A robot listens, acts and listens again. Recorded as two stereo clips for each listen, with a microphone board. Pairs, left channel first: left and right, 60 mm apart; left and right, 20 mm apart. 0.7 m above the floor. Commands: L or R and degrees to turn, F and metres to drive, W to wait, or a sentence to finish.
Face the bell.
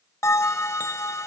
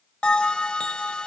L55
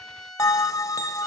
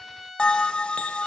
L70
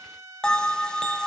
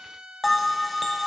L10
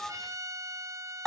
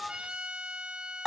Found it: a bell, straight ahead.